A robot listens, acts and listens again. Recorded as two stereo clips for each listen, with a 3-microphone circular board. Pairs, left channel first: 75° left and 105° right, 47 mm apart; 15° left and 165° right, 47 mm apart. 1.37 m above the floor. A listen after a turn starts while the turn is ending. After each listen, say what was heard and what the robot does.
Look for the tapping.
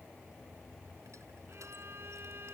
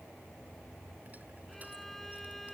Keep listening.
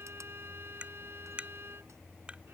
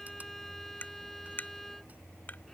The tapping: 40° right. Turn 40° right.
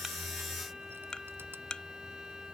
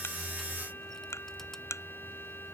Facing the tapping.